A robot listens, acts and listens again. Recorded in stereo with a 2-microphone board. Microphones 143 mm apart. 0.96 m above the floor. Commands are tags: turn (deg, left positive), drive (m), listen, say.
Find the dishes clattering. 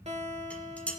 <turn deg="30"/>
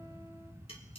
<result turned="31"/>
<listen/>
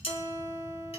<turn deg="140"/>
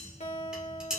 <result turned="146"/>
<say>Found it: dishes clattering, straight ahead.</say>